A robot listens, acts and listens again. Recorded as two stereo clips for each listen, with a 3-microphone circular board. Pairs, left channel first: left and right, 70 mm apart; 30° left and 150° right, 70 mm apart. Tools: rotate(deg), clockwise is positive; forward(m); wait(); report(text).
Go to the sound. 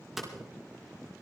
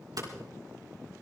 rotate(175)
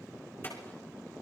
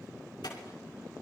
rotate(-35)
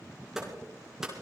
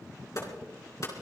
forward(1.0)
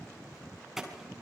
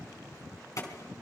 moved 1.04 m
forward(1.0)
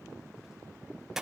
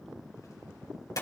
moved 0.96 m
forward(1.0)
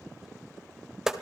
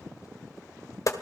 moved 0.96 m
forward(1.0)
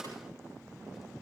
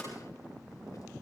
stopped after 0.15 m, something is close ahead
wait()
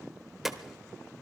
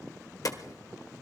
report("I am next to the hammering.")